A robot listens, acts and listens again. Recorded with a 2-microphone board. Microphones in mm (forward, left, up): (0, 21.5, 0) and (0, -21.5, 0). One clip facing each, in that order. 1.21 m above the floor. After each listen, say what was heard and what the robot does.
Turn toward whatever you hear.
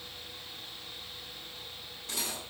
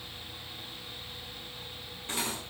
The cutlery clinking: about 30° right or 150° right. Turn 30° right.
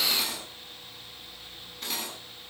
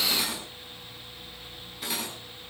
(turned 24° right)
Facing the cutlery clinking.